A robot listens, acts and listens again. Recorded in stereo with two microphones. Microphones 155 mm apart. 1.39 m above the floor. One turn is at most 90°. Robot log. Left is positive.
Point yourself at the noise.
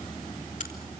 note: The crack: about 55° left or 125° left.
cmd yaw +55
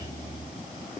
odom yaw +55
cmd idle
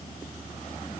end: I heard a crack, but can't make it out now. It was about straight ahead or 70° left.